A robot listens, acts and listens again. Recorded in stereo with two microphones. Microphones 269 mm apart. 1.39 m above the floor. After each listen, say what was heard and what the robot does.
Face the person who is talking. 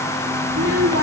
The child speaking: about 60° right or 120° right. Turn 60° right.
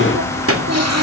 So it is at 60° right. Turn 60° right.
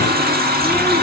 Keep listening.
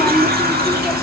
Keep listening.
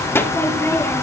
The child speaking is now 10° left. Turn 10° left.
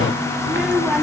Found it: a child speaking, straight ahead, 2 to 4 m away.